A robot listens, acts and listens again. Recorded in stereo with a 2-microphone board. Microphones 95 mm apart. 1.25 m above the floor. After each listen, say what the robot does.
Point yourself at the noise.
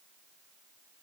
Keep listening.
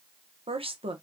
Turn 70° right.
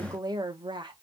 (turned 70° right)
Turn 50° right.
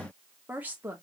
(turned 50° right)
Turn 20° right.
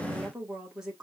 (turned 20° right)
Facing the woman speaking, 1 to 2 m away.